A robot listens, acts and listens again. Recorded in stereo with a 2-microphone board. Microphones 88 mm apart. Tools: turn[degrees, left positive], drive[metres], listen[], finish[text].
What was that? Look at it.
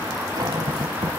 Thought: The cupboard door: about 55° right or 125° right.
Action: turn[-55]
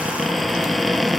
Action: finish[Facing the cupboard door.]